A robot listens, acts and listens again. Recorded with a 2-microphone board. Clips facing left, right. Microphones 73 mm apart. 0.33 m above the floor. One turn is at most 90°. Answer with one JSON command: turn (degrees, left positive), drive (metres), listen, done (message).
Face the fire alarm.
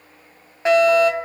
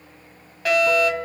{"turn": 25}
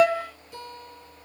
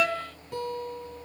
{"turn": 90}
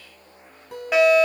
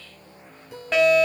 {"turn": 10}
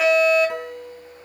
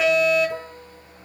{"done": "Found it: a fire alarm, straight ahead, 2 to 4 m away."}